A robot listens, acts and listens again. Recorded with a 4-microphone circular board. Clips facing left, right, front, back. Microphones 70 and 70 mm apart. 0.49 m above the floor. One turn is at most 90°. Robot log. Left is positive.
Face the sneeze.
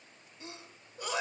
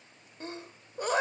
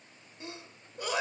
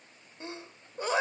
note: The sneeze: 125° right.
cmd yaw -90
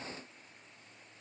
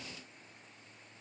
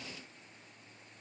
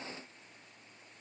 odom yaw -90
note: Nothing new. It was at 35° right.
cmd yaw -35
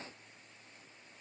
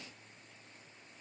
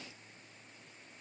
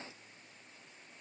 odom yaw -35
end: Facing where the sneeze came from. I can't hear it now.